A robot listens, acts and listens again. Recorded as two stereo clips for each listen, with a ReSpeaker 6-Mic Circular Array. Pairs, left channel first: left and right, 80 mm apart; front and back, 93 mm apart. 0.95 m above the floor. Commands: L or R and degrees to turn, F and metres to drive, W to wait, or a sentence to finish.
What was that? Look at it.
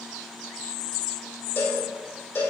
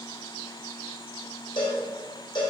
L30
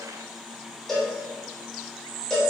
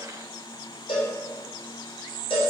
L10
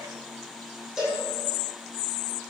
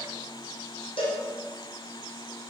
Facing the cowbell, 2 to 4 m away.